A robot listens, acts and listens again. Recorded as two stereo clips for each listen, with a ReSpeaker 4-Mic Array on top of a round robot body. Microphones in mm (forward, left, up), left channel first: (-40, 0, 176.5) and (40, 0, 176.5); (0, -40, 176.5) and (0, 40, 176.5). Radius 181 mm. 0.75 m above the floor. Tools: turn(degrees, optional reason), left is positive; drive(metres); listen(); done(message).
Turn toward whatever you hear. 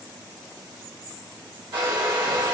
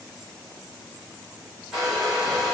done("Facing the hair dryer.")